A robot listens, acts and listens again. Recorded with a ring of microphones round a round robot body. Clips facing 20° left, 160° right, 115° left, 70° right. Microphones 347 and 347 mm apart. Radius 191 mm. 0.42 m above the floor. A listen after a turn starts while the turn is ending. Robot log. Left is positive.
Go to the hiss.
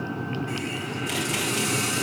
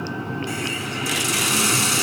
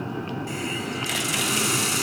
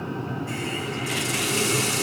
note: The hiss: straight behind.
cmd yaw +180
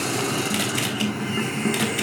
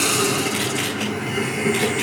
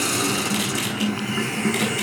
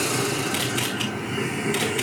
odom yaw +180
note: The hiss is now 85° left.
cmd yaw +85
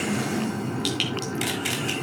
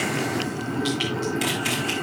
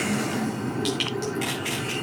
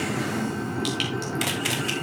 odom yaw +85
note: The hiss is now 15° left.
cmd yaw +15
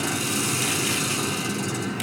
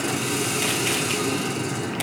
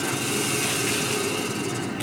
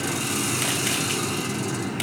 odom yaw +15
cmd fwd 1.0
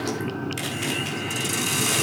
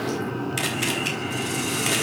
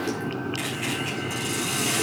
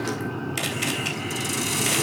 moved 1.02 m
cmd fwd 1.0
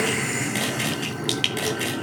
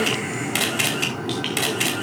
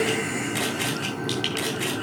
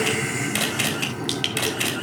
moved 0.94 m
cmd fwd 1.0
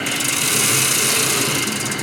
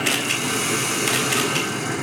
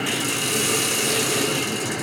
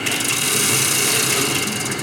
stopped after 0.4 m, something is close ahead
end: I am next to the hiss.